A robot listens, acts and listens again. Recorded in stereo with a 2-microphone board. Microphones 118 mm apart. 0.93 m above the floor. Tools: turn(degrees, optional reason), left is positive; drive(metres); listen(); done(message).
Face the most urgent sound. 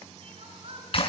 turn(degrees=-55, reason="The crying: about 55° right or 125° right.")
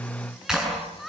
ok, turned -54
done("Facing the crying, over 4 m away.")